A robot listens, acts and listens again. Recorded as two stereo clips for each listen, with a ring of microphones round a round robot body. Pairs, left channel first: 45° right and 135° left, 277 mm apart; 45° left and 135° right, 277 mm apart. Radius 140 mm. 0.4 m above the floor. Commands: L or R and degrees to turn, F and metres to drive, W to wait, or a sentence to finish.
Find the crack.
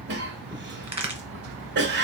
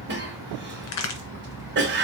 L65
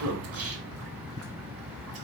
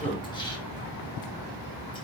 I heard a crack from this way, but can't make it out now.